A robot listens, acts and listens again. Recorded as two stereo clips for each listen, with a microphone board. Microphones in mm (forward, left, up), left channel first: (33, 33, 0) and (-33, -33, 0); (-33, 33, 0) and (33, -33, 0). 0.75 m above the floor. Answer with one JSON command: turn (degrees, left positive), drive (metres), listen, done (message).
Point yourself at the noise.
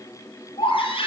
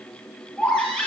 {"turn": 55}
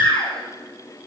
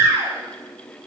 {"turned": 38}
{"turn": 20}
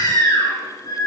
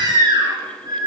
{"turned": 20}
{"done": "Found it: a baby crying, straight ahead, over 4 m away."}